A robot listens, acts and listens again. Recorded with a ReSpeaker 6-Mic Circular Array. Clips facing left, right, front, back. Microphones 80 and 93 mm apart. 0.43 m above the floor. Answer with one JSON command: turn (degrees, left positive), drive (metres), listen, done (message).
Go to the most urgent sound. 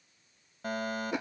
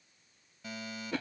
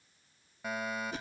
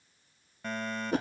{"turn": 80}
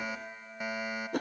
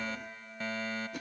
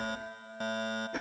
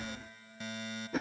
{"turn": 15}
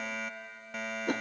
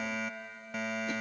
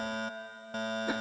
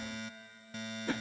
{"drive": 1.0}
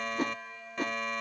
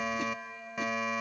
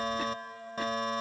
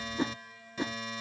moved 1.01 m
{"turn": -10}
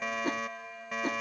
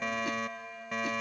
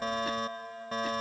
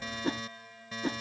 {"drive": 1.0}
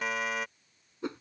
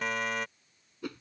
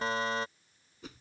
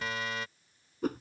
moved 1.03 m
{"drive": 1.0}
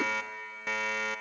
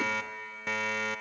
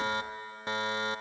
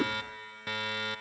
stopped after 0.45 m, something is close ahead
{"done": "Arrived at the fire alarm, straight ahead."}